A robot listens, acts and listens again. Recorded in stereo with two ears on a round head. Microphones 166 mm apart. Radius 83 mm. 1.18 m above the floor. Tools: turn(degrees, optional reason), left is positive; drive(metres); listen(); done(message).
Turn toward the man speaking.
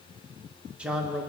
turn(degrees=-30)
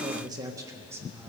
turn(degrees=-30)
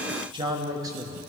turn(degrees=-165, reason="So it is at 165° right.")
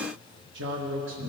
turn(degrees=-70, reason="The man speaking is now 70° right.")
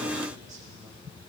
listen()
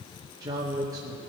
turn(degrees=-20, reason="The man speaking is now 20° right.")
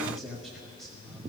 done("Facing the man speaking, 1 to 2 m away.")